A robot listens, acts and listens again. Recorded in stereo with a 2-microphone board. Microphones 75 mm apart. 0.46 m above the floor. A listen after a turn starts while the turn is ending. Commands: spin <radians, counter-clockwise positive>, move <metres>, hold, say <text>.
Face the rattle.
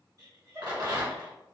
spin -1.05
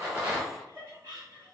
say Found it: a rattle, straight ahead, 1 to 2 m away.